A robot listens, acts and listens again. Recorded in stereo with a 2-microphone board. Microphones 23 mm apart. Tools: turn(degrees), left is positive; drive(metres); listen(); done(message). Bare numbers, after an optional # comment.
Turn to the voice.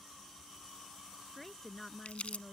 turn(30)
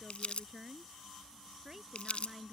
# So it is at 15° right.
turn(-15)
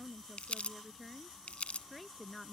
done("Found it: a woman speaking, straight ahead.")